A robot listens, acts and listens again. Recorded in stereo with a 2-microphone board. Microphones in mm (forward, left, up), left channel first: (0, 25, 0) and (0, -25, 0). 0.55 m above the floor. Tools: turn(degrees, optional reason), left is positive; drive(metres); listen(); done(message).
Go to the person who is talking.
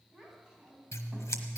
turn(degrees=-30)
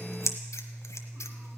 listen()
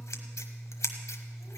listen()
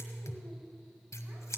done("I heard a child speaking, but can't make it out now. It was about 20° left or 140° right. I did not reach it.")